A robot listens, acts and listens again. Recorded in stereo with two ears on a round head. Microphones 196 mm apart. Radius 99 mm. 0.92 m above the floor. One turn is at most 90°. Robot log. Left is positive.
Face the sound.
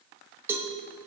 cmd yaw -30
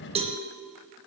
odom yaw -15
note: So it is at 155° right.
cmd yaw -90
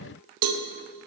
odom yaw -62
note: The cowbell is now 90° right.
cmd yaw -90
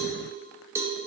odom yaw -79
note: The cowbell is now 10° right.
cmd yaw -10
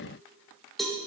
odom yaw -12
end: Found it: a cowbell, straight ahead, under 1 m away.